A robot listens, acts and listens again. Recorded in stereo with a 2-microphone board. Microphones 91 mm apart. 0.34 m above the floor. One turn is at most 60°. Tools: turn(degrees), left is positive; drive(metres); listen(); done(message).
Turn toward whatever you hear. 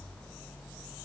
listen()
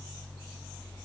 listen()
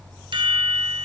turn(degrees=-60)
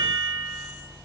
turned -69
turn(degrees=-35)
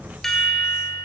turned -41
done("Found it: a chime, straight ahead.")